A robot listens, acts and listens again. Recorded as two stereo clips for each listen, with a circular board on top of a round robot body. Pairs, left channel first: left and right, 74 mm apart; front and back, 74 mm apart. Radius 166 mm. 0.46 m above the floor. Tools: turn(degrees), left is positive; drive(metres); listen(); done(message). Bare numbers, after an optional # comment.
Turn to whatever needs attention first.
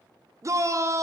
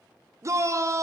# The shout: 135° right.
turn(-135)
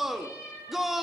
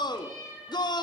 done("Facing the shout.")